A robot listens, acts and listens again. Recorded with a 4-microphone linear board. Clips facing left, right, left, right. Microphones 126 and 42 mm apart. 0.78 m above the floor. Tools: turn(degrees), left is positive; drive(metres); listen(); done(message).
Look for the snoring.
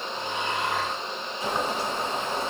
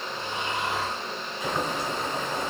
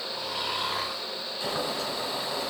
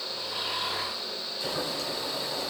turn(degrees=70)
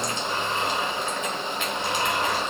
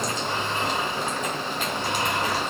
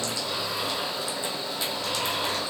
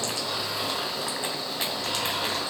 listen()
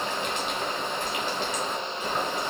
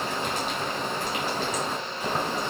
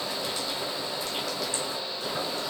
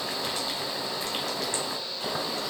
listen()
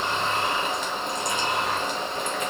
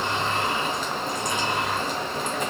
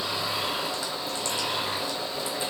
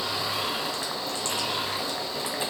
done("Found it: snoring, straight ahead.")